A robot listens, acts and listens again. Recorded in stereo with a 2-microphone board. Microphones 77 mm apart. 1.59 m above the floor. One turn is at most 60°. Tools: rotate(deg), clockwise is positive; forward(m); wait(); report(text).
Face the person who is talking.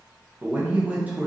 rotate(20)
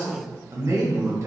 rotate(60)
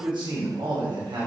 rotate(60)
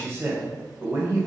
rotate(35)
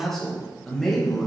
report("Found it: a man speaking, straight ahead, 2 to 4 m away.")